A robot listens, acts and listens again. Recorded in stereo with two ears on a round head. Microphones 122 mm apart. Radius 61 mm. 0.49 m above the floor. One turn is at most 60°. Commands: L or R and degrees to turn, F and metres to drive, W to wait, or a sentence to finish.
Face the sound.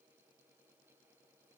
W
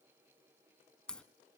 L30
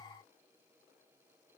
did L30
W
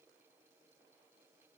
I heard a crack, but can't make it out now. It was about 20° right or 140° left.